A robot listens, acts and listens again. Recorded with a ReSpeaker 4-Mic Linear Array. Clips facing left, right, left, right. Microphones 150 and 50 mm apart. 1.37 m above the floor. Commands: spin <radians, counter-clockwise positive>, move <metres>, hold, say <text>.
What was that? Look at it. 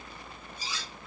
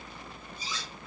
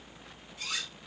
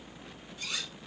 spin 1.31
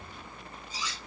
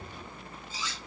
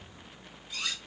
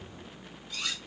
spin 0.26
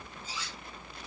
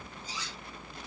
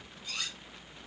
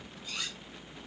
say Found it: cutlery clinking, straight ahead, 2 to 4 m away.